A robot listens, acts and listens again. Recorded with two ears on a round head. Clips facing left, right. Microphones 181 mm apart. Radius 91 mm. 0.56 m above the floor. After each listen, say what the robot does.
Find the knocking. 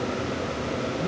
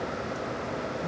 Keep listening.
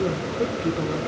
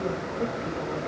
Keep listening.
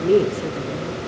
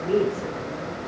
I can't make out knocking, only a woman speaking.